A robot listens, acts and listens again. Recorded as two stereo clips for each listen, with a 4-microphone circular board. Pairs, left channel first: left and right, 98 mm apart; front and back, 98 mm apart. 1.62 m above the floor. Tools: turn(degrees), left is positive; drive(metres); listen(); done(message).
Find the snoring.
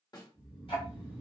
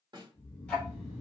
turn(degrees=20)
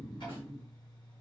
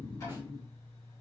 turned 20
done("Facing the snoring, 1 to 2 m away.")